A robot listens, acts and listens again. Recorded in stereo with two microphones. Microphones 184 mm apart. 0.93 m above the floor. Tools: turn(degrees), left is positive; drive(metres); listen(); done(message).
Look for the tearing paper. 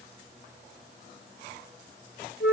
listen()
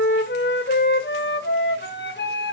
listen()
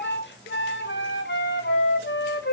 done("I can't make out tearing paper, only a flute.")